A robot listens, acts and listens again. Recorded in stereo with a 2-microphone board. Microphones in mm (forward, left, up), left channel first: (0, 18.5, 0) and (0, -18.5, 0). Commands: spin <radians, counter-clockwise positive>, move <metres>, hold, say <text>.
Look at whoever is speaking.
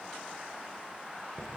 hold
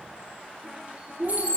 spin -1.31
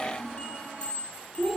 say Facing the child speaking.